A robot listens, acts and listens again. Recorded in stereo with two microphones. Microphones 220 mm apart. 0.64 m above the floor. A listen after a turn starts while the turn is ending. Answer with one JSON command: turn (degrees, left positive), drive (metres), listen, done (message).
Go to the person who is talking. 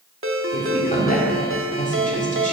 {"turn": 35}
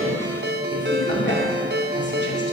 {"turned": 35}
{"turn": 100}
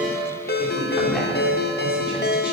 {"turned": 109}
{"listen": true}
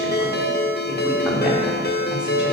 {"listen": true}
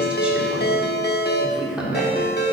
{"drive": 1.0}
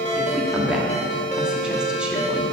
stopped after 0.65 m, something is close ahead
{"done": "I am next to the woman speaking."}